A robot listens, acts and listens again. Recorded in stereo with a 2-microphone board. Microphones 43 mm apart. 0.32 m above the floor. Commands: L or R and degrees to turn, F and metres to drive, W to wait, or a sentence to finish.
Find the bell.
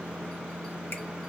W
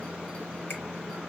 W
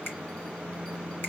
I can't make out a bell to turn to.